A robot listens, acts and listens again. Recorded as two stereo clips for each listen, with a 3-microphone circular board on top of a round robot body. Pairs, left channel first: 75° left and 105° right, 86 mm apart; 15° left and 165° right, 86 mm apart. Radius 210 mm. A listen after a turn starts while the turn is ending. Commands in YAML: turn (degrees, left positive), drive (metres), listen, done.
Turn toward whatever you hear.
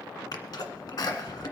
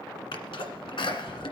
turn: 30
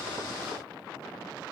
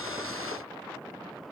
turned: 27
done: "Facing where the sneeze came from. I can't hear it now."